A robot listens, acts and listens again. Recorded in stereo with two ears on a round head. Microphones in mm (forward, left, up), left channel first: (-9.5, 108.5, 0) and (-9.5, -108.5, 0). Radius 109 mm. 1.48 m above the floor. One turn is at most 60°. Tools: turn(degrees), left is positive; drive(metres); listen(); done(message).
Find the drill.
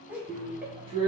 turn(degrees=-25)
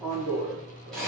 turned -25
done("Found it: a drill, straight ahead.")